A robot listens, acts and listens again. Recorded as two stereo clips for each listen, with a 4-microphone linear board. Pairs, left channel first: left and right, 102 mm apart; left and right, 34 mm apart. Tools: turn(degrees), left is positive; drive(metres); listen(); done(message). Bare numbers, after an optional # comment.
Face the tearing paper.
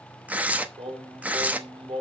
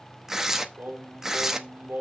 turn(-30)
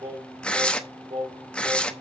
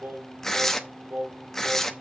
# So it is at 10° left.
turn(10)
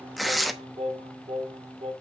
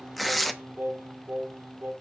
done("Found it: tearing paper, straight ahead, under 1 m away.")